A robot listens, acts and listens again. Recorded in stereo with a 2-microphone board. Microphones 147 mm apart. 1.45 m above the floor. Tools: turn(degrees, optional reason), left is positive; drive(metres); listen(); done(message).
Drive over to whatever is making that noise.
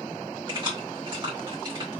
turn(degrees=-35, reason="The keys jangling: about 35° right or 145° right.")
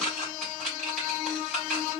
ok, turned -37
drive(metres=1.0)
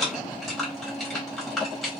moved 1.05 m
drive(metres=1.0)
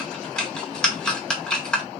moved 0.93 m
drive(metres=1.0)
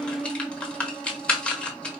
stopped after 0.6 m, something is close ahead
turn(degrees=10, reason="The keys jangling is now 10° left.")
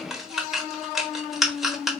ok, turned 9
done("Arrived at the keys jangling, straight ahead.")